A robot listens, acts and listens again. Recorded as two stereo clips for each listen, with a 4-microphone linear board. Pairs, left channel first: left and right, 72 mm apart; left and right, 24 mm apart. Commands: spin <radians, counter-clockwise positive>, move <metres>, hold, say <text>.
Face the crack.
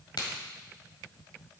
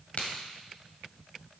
spin 1.13
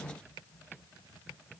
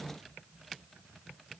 hold
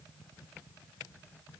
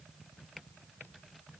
say I heard a crack, but can't make it out now. It was about straight ahead or 50° left.